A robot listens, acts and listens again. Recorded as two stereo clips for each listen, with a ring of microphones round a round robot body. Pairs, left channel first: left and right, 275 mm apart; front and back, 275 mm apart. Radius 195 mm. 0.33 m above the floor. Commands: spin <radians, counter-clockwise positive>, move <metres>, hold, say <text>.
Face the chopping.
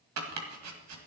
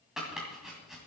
spin -1.57
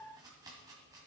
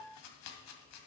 spin -0.17
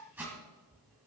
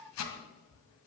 say Found it: chopping, straight ahead.